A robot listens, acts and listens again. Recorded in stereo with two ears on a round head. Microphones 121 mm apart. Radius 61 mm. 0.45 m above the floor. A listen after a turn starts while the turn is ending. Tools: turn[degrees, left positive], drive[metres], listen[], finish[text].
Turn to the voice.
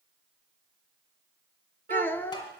Action: turn[30]
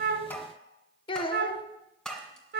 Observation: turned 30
Thought: So it is at 135° left.
Action: turn[135]
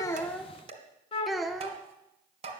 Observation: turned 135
Action: finish[Facing the child speaking, under 1 m away.]